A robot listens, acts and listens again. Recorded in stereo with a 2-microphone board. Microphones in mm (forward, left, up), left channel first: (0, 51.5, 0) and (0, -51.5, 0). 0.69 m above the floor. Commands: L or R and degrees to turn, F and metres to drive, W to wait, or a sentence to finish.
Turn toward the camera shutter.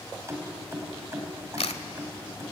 L90
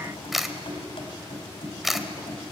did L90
Found it: a camera shutter, straight ahead.